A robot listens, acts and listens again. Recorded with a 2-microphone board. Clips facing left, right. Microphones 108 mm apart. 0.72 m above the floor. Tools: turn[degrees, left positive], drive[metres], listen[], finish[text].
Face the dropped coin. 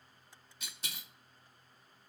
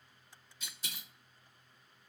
Thought: The dropped coin: about 65° left or 115° left.
Action: turn[65]
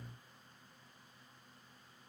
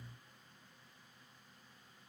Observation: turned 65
Action: listen[]
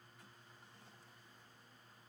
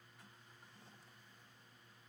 Action: finish[I heard a dropped coin, but can't make it out now. It was about straight ahead or 50° left.]